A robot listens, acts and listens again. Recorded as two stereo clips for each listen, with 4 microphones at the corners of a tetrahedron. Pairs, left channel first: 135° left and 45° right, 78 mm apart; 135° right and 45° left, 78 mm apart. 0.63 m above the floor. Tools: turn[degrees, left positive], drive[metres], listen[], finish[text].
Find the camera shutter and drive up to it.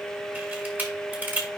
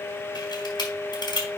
Thought: The camera shutter: 110° right.
Action: turn[-110]
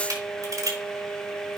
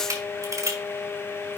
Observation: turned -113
Action: drive[1.0]
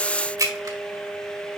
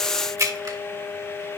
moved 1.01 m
Action: drive[1.0]
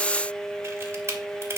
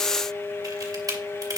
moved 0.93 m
Thought: The camera shutter is now 10° left.
Action: turn[10]
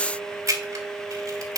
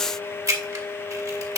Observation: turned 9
Action: drive[1.0]
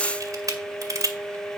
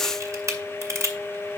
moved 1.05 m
Action: drive[1.0]
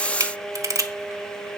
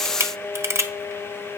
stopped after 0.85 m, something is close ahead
Action: finish[I am next to the camera shutter.]